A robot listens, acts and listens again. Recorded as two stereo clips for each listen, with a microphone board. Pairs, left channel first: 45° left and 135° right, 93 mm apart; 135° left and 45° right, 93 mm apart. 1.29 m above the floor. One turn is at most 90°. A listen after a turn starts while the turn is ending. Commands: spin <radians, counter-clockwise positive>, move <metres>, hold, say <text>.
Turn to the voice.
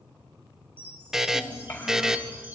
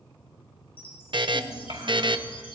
spin -0.35
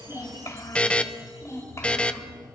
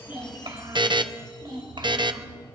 spin -0.26
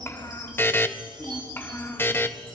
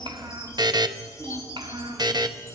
spin -0.44
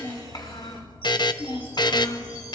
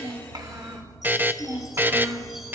spin 0.17
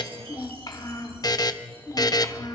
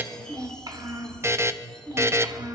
say Found it: a child speaking, straight ahead.